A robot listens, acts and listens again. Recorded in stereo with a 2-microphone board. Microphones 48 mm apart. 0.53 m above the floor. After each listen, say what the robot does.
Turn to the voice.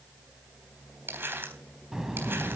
Turn 30° right.
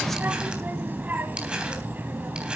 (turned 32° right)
Turn 135° right.
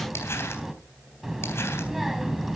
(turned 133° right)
Found it: a child speaking, straight ahead.